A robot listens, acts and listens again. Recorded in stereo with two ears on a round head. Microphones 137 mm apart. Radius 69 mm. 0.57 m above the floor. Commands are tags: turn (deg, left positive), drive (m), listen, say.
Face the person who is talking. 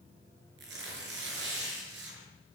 <listen/>
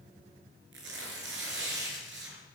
<listen/>
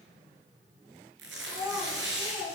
<turn deg="-25"/>
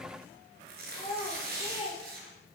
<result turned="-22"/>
<say>Facing the child speaking.</say>